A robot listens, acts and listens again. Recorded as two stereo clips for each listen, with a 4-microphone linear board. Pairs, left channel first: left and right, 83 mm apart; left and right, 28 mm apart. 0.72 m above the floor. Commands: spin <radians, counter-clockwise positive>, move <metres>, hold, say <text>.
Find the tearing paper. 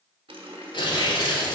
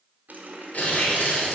spin 1.13
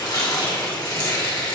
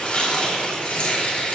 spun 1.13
spin 0.79
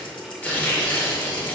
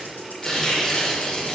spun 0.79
spin 0.26
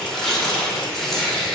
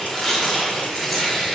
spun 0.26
say Facing the tearing paper.